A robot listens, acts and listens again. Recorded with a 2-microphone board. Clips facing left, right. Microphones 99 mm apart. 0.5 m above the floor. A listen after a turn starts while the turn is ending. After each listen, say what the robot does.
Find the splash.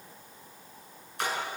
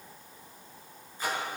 Turn 90° left.
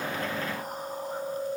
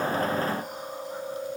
Facing where the splash came from. I can't hear it now.